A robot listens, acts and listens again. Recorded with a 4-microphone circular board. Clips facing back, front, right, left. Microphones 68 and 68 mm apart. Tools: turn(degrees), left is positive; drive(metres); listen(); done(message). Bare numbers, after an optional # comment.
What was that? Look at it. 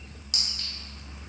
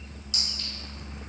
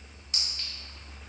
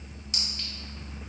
# The clink: 175° left.
turn(175)
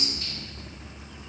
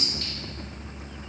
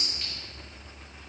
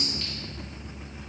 listen()
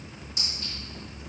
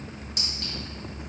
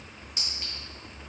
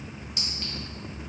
# The clink is now 25° right.
turn(-25)
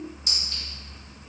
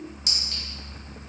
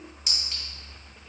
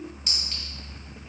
# The clink is now 10° right.
turn(-10)
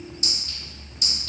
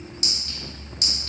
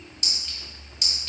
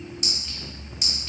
done("Facing the clink, 1 to 2 m away.")